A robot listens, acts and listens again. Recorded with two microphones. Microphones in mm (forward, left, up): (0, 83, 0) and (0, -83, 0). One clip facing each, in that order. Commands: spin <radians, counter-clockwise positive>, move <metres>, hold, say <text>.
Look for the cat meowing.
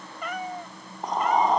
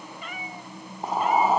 spin 1.57
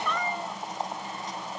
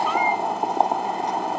hold
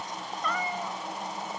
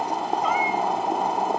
hold
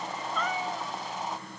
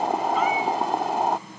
say Facing where the cat meowing came from. I can't hear it now.